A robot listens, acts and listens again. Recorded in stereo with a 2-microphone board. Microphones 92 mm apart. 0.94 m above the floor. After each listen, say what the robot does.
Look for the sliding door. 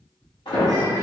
Turn 65° left.
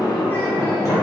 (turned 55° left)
Turn 45° left.
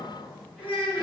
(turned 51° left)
Turn 10° right.
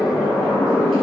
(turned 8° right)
Facing the sliding door, 1 to 2 m away.